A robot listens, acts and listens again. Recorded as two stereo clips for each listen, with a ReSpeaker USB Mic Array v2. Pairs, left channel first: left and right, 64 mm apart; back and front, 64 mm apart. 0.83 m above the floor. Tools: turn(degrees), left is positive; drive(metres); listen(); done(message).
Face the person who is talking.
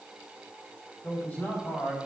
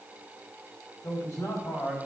turn(degrees=145)
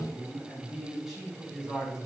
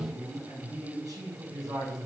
turn(degrees=-10)
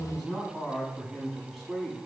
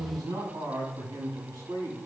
done("Facing the man speaking.")